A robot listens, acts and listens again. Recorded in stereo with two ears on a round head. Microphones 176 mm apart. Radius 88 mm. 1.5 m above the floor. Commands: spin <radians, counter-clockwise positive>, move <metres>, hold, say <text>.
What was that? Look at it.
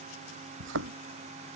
spin -1.22
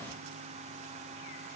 hold
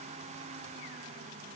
say I heard a thud, but can't make it out now. It was about straight ahead or 40° right.